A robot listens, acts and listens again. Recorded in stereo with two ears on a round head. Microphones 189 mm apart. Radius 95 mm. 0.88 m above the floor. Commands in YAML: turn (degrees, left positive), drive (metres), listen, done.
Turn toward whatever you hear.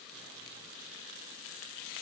listen: true
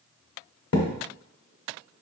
turn: 90
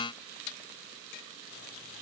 done: "I heard a thud from this way, but can't make it out now."